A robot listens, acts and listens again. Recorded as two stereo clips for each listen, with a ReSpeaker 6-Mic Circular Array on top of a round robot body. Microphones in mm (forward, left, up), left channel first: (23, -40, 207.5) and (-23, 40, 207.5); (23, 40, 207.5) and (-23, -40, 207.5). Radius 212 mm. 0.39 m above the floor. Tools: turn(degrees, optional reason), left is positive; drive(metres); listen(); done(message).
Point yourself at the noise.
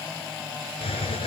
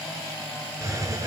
turn(degrees=-65, reason="The hiss: 65° right.")
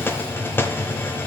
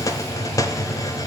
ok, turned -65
done("Facing the hiss.")